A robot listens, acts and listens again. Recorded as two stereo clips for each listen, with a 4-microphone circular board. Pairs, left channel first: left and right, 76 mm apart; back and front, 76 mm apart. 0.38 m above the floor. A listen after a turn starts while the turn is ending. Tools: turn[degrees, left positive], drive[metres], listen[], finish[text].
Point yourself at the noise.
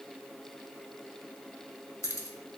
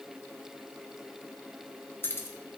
Thought: The keys jangling: 130° left.
Action: turn[130]
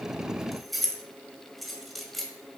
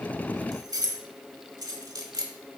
Action: finish[Facing the keys jangling.]